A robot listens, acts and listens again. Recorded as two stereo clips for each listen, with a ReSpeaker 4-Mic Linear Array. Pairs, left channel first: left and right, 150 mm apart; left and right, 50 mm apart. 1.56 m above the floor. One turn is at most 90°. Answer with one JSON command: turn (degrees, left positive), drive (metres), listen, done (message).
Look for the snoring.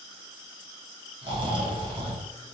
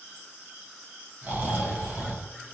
{"turn": -30}
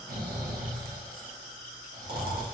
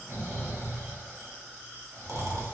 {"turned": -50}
{"turn": -90}
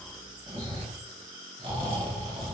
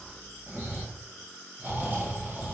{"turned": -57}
{"turn": -40}
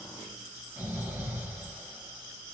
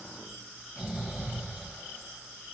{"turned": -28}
{"turn": -15}
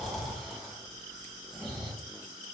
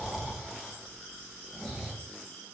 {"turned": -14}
{"done": "Found it: snoring, straight ahead, 1 to 2 m away."}